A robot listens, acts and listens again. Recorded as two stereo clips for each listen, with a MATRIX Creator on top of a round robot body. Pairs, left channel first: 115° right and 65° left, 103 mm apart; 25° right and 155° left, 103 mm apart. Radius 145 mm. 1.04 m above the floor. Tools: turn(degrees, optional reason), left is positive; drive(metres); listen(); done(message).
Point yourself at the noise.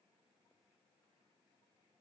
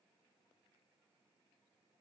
listen()
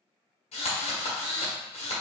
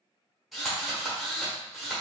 turn(degrees=-115, reason="The drill: 115° right.")
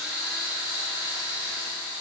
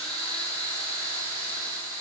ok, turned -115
turn(degrees=-10, reason="The drill is now 10° right.")
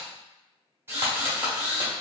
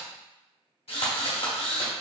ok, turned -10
done("Facing the drill.")